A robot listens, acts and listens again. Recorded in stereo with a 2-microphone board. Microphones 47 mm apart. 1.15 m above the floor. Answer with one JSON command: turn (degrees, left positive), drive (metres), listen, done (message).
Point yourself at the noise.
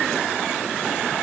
{"listen": true}
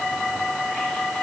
{"listen": true}
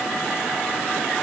{"done": "I can't make out anything to turn to."}